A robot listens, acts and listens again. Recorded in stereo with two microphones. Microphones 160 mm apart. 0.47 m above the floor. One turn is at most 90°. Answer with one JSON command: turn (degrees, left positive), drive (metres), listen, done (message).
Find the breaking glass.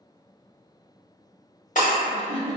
{"turn": 50}
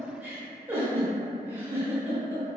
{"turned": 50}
{"listen": true}
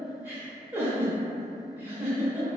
{"done": "I heard breaking glass, but can't make it out now. It was about straight ahead or 80° left."}